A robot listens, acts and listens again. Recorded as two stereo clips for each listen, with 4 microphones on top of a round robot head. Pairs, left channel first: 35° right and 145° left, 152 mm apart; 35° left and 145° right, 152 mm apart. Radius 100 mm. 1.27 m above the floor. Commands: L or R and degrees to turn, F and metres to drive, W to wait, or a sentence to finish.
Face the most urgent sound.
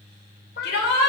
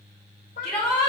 R50
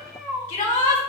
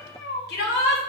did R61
L10
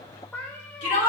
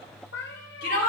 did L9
Found it: a shout, straight ahead.